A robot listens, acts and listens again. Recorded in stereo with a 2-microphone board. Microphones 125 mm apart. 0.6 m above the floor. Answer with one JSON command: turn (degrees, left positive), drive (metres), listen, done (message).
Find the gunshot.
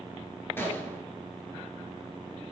{"turn": 20}
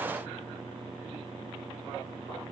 {"listen": true}
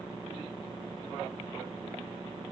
{"done": "I heard a gunshot, but can't make it out now. It was about straight ahead or 140° left."}